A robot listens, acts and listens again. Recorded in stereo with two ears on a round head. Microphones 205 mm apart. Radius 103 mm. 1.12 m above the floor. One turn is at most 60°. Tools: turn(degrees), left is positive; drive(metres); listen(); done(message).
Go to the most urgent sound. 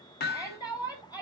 turn(degrees=15)
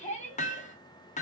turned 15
turn(degrees=60)
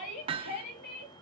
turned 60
turn(degrees=60)
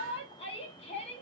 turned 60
turn(degrees=25)
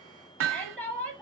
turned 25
drive(metres=1.0)
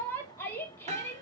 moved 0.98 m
turn(degrees=10)
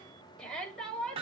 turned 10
drive(metres=1.0)
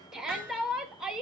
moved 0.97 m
drive(metres=1.0)
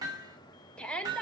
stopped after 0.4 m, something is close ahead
done("I am next to the shout.")